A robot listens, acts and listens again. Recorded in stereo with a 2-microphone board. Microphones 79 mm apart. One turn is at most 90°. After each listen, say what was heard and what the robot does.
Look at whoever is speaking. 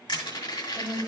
The woman speaking: about 65° left or 115° left. Turn 65° left.
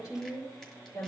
So it is at 60° left. Turn 60° left.
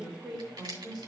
Facing the woman speaking, 2 to 4 m away.